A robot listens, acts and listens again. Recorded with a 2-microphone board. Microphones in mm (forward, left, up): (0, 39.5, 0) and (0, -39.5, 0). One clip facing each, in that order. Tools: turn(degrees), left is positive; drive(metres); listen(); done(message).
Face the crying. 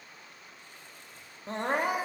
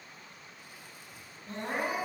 turn(degrees=75)
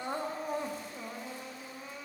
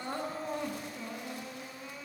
turn(degrees=20)
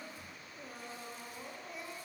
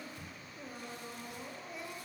done("Facing the crying.")